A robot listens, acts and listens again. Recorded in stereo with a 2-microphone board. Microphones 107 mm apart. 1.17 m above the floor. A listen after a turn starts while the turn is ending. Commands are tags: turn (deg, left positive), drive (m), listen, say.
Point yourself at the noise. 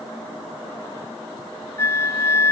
<turn deg="25"/>
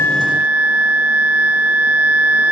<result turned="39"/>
<turn deg="-15"/>
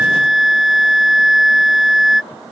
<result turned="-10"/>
<say>Facing the flute.</say>